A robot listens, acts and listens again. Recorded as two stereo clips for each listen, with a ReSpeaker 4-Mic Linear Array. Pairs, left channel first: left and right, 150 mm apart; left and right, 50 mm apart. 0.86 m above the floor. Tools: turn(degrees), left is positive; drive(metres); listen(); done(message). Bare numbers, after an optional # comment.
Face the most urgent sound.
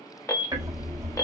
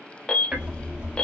# The alarm: about 20° left or 160° left.
turn(20)
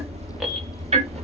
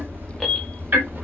listen()
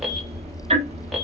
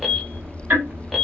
listen()
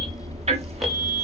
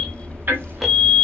done("Facing the alarm, 1 to 2 m away.")